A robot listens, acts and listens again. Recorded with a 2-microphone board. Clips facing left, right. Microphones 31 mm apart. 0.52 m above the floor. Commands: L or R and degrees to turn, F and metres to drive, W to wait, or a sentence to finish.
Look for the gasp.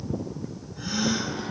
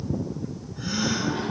L30
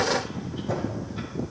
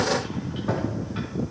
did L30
W
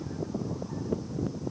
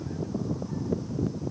I heard a gasp, but can't make it out now. It was about 30° right or 150° left.